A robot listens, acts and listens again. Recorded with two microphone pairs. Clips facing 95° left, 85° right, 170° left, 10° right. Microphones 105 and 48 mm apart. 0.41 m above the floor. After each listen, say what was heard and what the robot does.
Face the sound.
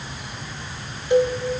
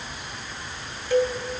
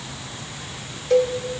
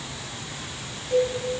The cowbell: 165° left. Turn 165° left.
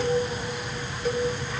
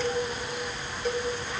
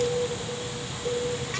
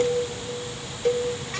The cowbell is now 10° left. Turn 10° left.
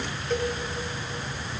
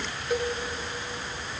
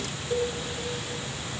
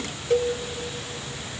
Keep listening.
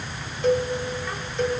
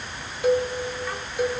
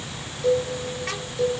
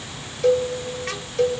Found it: a cowbell, straight ahead, 1 to 2 m away.